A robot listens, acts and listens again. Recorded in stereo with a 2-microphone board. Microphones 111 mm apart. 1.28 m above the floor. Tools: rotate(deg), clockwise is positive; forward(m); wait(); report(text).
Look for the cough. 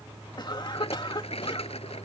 rotate(-40)
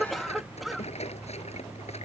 report("Facing the cough.")